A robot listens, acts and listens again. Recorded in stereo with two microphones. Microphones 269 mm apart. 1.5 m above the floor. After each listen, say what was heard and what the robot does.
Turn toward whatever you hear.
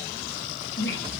The squeak: about 45° left or 135° left. Turn 45° left.
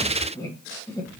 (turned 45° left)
So it is at 15° left. Turn 15° left.
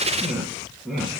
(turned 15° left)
Found it: a squeak, straight ahead, 1 to 2 m away.